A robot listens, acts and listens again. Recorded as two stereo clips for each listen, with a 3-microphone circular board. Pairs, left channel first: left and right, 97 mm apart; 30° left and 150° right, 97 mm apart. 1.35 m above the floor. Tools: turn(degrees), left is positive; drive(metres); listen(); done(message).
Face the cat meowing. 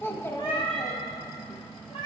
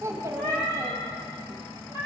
turn(degrees=70)
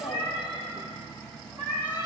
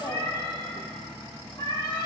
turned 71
turn(degrees=-20)
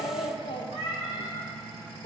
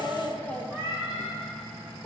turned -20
done("Facing the cat meowing.")